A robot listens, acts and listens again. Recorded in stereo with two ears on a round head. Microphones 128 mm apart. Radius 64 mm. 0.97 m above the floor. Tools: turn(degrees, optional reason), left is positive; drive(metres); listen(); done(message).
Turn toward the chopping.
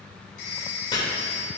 turn(degrees=35, reason="The chopping: about 35° left or 145° left.")
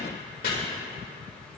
turn(degrees=110, reason="So it is at 110° left.")
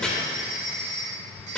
done("Facing the chopping, 2 to 4 m away.")